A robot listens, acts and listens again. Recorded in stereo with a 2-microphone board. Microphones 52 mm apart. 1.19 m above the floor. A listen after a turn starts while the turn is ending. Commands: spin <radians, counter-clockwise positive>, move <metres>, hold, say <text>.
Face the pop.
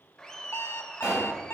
spin -0.35
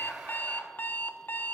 hold
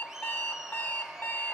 say I heard a pop, but can't make it out now. It was about straight ahead or 140° right.